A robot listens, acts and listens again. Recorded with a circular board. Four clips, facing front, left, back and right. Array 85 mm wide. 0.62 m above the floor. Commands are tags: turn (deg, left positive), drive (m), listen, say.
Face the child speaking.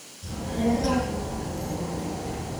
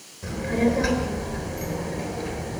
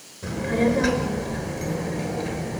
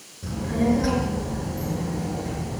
<turn deg="160"/>
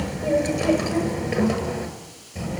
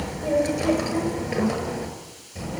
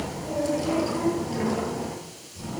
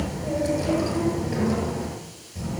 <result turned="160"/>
<turn deg="40"/>
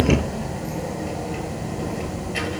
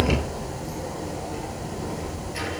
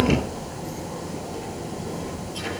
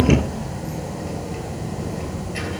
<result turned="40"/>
<say>Facing the child speaking, over 4 m away.</say>